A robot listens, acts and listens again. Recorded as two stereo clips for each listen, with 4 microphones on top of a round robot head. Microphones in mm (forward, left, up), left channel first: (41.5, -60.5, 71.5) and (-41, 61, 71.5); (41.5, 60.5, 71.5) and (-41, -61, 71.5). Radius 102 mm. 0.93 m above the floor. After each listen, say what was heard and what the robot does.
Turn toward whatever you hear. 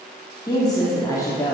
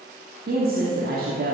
The woman speaking: 125° right. Turn 125° right.
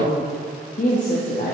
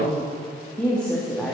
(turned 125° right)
The woman speaking is now 35° right. Turn 35° right.
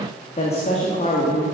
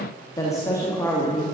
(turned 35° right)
The woman speaking is now 20° right. Turn 20° right.
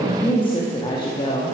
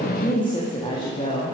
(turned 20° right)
Facing the woman speaking.